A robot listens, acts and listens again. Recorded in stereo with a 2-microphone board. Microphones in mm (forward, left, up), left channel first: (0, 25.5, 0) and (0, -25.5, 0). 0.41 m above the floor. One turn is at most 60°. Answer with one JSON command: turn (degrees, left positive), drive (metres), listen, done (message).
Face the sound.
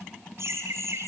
{"turn": -60}
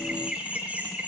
{"turn": -30}
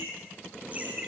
{"turn": -30}
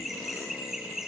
{"turn": -10}
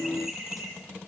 {"turn": -10}
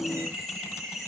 {"done": "Found it: laughter, straight ahead."}